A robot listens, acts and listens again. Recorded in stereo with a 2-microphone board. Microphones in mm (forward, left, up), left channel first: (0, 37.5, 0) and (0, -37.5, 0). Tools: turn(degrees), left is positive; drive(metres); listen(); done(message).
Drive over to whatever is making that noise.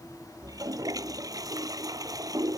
turn(degrees=-55)
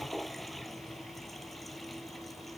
drive(metres=1.0)
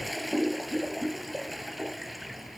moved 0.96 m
drive(metres=1.0)
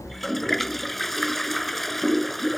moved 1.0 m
drive(metres=1.0)
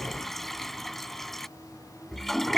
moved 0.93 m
drive(metres=1.0)
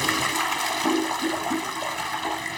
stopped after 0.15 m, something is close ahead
done("Arrived at the toilet flushing, straight ahead.")